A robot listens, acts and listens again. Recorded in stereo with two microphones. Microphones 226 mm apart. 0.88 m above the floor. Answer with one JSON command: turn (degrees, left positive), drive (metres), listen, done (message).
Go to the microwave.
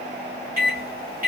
{"turn": -40}
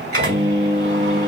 {"turn": -100}
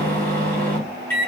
{"turn": 10}
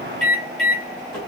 {"drive": 1.0}
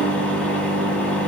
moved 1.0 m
{"drive": 1.0}
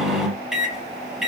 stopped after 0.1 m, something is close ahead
{"done": "Arrived at the microwave, straight ahead."}